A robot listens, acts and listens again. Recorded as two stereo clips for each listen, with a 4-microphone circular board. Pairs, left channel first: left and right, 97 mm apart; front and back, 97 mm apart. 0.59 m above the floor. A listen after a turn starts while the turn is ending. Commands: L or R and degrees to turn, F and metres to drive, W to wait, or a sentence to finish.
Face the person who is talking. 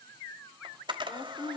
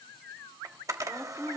L85
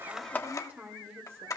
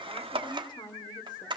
R25
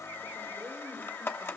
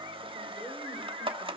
W
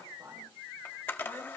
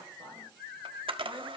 R40
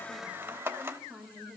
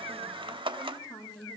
Found it: a woman speaking, straight ahead, 2 to 4 m away.